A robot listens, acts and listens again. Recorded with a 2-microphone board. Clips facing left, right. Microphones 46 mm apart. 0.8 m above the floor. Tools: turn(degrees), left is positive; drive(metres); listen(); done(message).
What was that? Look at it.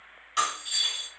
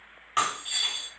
turn(degrees=-35)
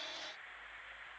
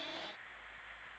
listen()
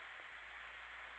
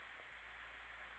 done("I heard breaking glass, but can't make it out now. It was about straight ahead or 110° right.")